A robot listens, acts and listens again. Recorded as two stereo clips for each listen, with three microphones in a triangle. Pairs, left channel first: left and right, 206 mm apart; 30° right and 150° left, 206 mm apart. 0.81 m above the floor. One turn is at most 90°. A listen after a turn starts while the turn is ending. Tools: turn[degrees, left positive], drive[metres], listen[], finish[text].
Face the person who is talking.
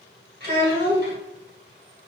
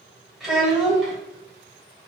Thought: The child speaking: 125° right.
Action: turn[-90]
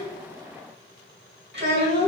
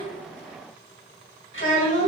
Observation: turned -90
Thought: The child speaking is now 55° right.
Action: turn[-55]
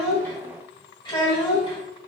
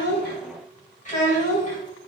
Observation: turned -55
Thought: The child speaking is now 20° left.
Action: turn[20]
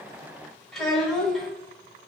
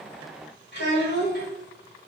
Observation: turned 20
Action: finish[Facing the child speaking, 1 to 2 m away.]